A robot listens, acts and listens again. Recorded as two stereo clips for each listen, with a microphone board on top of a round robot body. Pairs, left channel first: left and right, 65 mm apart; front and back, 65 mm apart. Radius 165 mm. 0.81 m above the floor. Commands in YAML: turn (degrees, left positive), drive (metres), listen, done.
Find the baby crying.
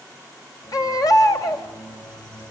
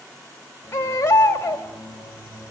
turn: 60
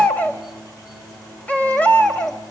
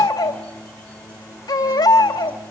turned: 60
turn: 20
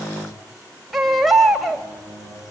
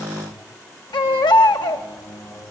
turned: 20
done: "Facing the baby crying, 2 to 4 m away."